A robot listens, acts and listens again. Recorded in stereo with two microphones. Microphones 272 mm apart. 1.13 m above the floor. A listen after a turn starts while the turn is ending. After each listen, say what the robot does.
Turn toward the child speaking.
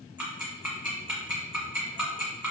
Keep listening.
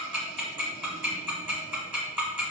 Keep listening.
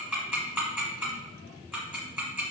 I can't make out a child speaking, only ticking.